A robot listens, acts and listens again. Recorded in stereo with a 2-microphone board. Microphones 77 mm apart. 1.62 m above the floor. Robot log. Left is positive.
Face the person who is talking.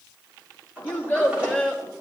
note: The child speaking: about 20° left or 160° left.
cmd yaw +20
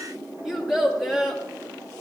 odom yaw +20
end: Facing the child speaking, 2 to 4 m away.